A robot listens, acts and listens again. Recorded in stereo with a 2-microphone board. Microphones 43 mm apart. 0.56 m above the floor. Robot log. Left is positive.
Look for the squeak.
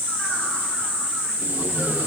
cmd idle
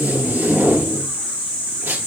cmd idle
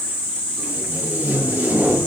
end: I can't make out a squeak, only tape being pulled.